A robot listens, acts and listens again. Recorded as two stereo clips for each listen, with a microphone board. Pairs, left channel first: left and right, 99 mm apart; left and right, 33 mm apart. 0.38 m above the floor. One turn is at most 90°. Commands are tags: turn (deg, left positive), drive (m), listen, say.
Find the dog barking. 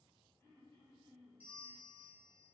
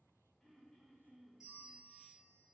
<listen/>
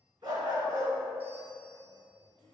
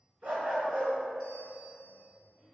<turn deg="-45"/>
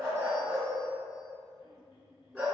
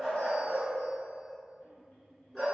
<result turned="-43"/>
<say>Facing the dog barking, 1 to 2 m away.</say>